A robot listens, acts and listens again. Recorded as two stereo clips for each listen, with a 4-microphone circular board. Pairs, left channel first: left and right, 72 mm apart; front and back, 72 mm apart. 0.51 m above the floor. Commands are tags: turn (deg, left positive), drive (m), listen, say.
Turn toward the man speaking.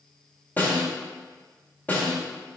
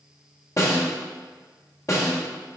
<listen/>
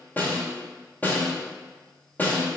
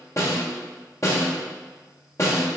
<listen/>
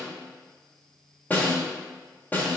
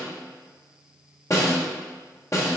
<say>I can't make out a man speaking to turn to.</say>